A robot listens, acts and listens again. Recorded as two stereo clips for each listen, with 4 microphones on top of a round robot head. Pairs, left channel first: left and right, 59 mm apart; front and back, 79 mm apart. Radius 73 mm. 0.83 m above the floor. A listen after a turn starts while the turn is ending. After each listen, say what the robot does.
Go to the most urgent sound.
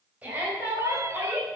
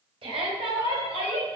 Turn 165° right.
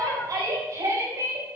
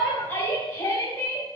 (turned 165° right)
Turn 60° right.
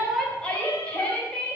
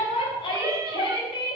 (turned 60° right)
Turn 20° left.
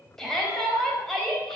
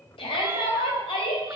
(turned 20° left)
Drive 1.0 m forward.
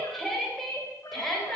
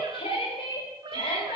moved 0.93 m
Drive 1.0 m forward.
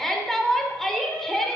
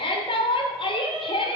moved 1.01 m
Drive 1.0 m forward.
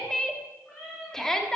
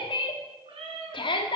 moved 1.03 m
Turn 10° left.
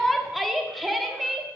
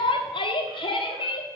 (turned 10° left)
Drive 1.0 m forward.
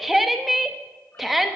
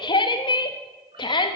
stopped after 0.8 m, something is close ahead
Arrived at the shout, straight ahead.